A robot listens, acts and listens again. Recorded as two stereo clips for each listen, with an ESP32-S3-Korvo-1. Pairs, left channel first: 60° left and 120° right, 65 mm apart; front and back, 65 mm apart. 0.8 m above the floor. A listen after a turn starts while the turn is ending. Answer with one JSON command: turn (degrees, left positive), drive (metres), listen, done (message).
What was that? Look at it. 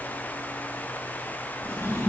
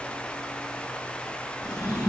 {"turn": 15}
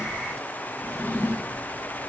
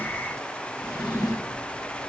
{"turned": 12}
{"done": "Found it: a drawer, straight ahead, 2 to 4 m away."}